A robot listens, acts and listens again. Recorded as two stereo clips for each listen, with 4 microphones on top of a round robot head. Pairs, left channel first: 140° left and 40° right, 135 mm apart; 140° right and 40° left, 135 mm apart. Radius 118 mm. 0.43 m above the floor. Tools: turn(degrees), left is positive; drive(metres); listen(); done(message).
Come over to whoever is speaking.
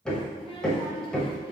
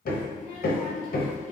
turn(degrees=-165)
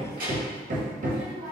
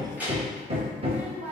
turn(degrees=-40)
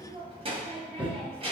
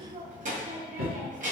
turn(degrees=10)
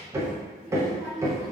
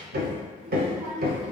drive(metres=1.0)
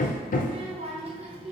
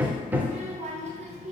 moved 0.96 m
drive(metres=1.0)
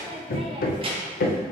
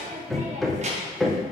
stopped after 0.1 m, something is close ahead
turn(degrees=10)
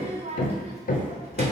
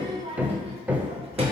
done("Arrived at the child speaking, straight ahead.")